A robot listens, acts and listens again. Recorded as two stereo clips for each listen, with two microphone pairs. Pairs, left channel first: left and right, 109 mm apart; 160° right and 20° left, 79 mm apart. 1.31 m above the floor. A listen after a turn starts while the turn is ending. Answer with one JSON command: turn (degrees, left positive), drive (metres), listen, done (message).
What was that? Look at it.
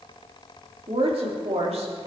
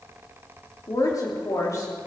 {"turn": -110}
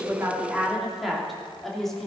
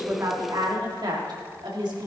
{"done": "Found it: a woman speaking, straight ahead, 2 to 4 m away."}